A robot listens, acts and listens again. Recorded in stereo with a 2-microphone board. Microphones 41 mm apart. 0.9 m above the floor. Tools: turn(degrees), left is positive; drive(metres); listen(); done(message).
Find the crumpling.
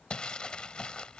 turn(degrees=25)
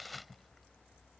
done("Facing the crumpling.")